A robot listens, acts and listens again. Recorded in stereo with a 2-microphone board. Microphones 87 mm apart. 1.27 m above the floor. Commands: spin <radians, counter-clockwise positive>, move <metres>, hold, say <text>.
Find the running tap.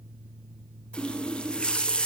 spin 0.52
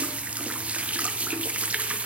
spin -0.26
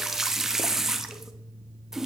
say Found it: a running tap, straight ahead.